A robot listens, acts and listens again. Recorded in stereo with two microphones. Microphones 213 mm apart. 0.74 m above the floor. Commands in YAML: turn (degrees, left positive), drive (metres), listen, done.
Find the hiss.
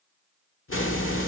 turn: 75
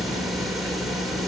done: "Facing the hiss."